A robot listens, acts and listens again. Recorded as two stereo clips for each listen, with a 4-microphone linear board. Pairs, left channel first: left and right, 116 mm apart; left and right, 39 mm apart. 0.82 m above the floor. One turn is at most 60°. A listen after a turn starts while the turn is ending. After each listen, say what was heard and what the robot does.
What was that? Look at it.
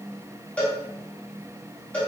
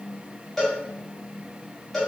Turn 30° left.
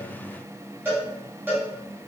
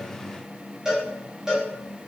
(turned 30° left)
So it is at 15° right. Turn 15° right.
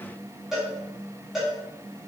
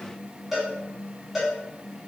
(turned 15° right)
Found it: a cowbell, straight ahead, 1 to 2 m away.